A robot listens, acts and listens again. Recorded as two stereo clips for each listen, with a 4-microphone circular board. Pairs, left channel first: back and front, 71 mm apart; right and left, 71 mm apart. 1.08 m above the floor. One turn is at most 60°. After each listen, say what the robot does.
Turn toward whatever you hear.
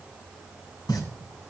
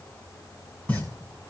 Turn 60° right.
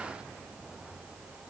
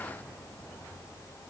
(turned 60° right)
Turn 60° right.
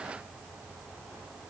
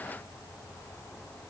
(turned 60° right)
Turn 40° right.
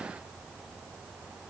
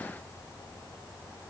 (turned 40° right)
Facing where the pop came from. I can't hear it now.